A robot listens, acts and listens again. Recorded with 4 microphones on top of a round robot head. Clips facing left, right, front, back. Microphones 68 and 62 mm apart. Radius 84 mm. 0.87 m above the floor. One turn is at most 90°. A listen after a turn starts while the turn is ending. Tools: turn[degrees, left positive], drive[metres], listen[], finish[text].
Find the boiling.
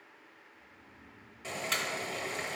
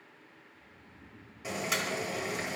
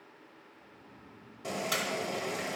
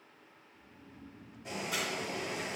Thought: The boiling: 10° right.
Action: turn[-10]
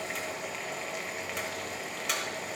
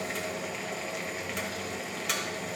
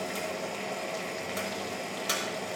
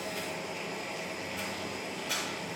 Action: finish[Found it: boiling, straight ahead.]